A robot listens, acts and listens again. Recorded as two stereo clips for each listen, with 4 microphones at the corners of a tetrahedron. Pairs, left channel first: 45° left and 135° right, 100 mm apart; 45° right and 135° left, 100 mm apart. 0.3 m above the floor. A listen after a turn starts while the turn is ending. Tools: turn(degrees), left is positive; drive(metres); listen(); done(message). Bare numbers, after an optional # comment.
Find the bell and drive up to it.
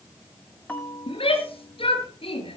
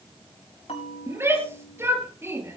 # The bell: 30° right.
turn(-30)
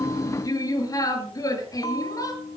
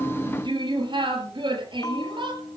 drive(1.0)
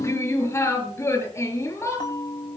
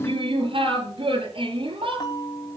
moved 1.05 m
drive(1.0)
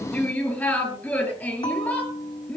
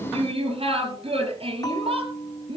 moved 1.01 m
drive(1.0)
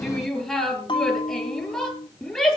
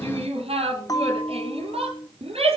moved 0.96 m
# The bell is now 10° left.
turn(10)
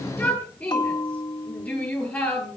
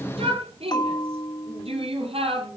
drive(1.0)
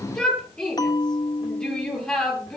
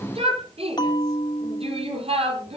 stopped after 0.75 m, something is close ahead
done("I am next to the bell.")